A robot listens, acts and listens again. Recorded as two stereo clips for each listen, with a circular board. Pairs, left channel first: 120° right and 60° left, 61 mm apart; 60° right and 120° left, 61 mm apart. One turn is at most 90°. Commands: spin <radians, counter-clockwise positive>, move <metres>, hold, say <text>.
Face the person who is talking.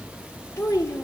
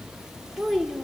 spin -1.57
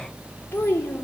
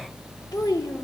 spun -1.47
spin -1.13
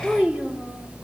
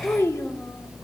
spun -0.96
spin -0.17
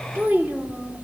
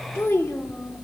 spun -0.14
say Facing the child speaking.